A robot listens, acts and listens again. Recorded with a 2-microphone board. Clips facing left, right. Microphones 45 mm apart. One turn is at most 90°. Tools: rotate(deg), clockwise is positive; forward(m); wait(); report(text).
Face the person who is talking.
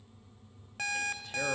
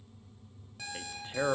rotate(30)
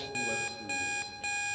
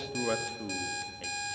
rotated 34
rotate(90)
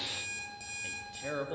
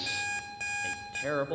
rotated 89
rotate(25)
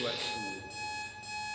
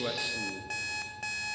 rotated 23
report("Found it: a man speaking, straight ahead, under 1 m away.")